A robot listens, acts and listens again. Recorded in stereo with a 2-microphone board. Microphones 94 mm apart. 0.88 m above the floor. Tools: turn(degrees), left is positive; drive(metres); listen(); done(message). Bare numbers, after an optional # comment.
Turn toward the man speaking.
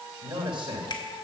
# The man speaking: about 60° right or 120° right.
turn(-60)
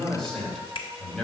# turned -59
done("Facing the man speaking, over 4 m away.")